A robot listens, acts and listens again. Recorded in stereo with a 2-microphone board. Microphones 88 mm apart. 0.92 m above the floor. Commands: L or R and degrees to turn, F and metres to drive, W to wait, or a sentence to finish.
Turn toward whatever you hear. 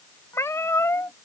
L35
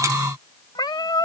L105
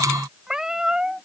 R10
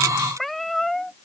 Found it: a cat meowing, straight ahead.